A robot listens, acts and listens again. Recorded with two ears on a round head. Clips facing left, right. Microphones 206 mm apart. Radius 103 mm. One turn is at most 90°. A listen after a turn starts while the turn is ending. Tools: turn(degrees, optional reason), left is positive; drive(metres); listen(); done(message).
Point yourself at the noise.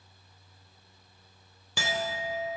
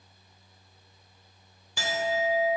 turn(degrees=60, reason="The clink: about 60° left or 120° left.")
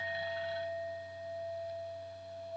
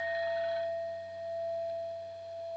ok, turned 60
done("Facing the clink.")